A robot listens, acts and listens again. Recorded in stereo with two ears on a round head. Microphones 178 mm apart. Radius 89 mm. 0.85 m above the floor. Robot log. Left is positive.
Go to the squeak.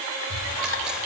note: The squeak: about 70° right or 110° right.
cmd yaw -70
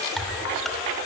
note: So it is at 40° right.
cmd yaw -40
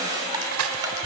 cmd idle
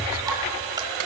note: The squeak is now 20° right.
cmd yaw -20
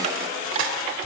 cmd idle
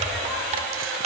cmd fwd 1.0
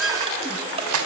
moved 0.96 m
cmd fwd 1.0
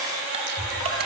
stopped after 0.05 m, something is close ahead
end: Something is in my way. I am facing the squeak but have not reached it.